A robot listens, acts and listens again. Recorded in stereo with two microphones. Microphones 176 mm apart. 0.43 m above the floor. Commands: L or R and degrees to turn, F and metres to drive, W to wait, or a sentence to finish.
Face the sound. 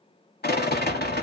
L65
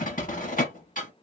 L50
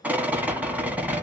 R10
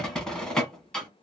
Facing the rattle, 1 to 2 m away.